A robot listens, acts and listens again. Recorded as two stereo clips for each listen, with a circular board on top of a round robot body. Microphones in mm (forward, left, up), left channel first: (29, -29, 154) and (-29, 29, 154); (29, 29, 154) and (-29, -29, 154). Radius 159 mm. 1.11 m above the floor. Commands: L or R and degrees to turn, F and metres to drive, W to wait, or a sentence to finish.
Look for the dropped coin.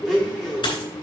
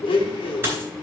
R70
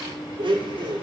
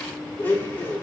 Facing where the dropped coin came from. I can't hear it now.